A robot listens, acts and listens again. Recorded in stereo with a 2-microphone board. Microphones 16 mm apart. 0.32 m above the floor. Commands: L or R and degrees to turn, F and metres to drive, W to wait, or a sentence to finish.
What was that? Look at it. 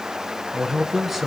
R15
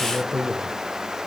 Facing the man speaking, 2 to 4 m away.